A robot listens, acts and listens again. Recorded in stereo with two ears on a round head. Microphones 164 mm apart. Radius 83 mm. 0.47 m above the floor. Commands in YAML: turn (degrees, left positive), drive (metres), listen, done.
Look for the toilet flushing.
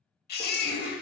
turn: -30
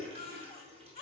listen: true
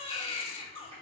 listen: true
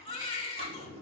turn: -145
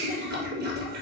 turn: -55
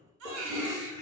turn: -20
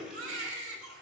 listen: true
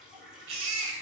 listen: true
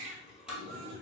done: "Facing the toilet flushing."